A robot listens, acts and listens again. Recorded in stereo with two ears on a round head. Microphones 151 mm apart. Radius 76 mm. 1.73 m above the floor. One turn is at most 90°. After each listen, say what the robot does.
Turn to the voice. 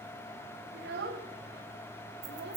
Turn 65° right.
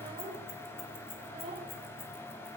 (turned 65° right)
Turn 30° right.
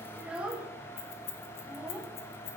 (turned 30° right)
Found it: a child speaking, straight ahead, 1 to 2 m away.